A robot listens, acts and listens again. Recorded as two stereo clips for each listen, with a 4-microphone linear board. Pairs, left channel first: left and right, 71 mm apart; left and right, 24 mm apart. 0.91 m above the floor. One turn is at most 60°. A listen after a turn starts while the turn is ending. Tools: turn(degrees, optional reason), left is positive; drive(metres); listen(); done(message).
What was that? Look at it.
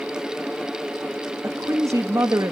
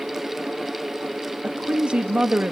turn(degrees=-50, reason="The woman speaking: about 50° right or 130° right.")
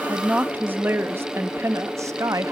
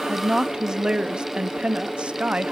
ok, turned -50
turn(degrees=-50, reason="So it is at 50° right.")
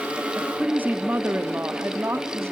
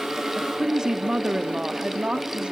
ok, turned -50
turn(degrees=-35, reason="The woman speaking is now 35° right.")
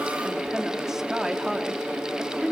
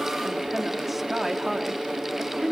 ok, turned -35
done("Found it: a woman speaking, straight ahead, 2 to 4 m away.")